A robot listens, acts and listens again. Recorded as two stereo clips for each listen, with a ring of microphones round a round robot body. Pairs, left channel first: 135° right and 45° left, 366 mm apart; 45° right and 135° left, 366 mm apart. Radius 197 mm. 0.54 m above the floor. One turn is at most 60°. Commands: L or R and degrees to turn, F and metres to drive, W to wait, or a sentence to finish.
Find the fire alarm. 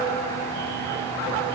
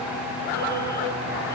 W
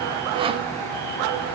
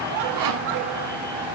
W
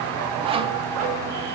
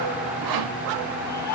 I can't make out a fire alarm, only sawing.